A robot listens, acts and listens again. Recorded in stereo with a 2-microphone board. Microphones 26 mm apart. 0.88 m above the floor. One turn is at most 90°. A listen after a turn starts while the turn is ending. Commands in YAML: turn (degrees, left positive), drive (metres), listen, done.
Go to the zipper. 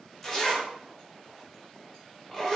turn: 30
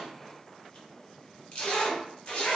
turn: 90
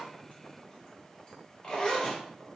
turn: 35
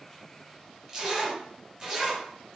turn: -15
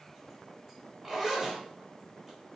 drive: 1.0
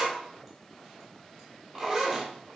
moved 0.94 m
drive: 1.0
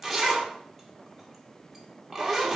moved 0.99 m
drive: 1.0
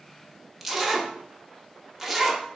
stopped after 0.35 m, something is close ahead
done: "I am next to the zipper."